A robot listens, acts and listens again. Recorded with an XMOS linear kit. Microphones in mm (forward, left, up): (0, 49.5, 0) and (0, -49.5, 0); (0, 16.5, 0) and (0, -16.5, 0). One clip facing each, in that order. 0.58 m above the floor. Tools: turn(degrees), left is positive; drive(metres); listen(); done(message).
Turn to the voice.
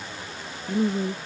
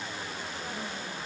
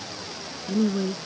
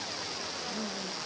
turn(degrees=75)
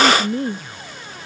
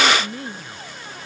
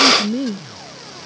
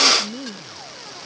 turn(degrees=35)
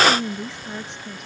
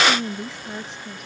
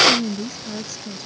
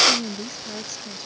done("Facing the woman speaking.")